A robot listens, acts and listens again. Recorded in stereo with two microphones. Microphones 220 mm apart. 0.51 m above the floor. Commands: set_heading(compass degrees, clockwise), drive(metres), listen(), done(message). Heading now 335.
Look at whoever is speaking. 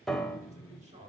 set_heading(5)
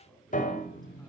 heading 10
done("Found it: a man speaking, straight ahead, 2 to 4 m away.")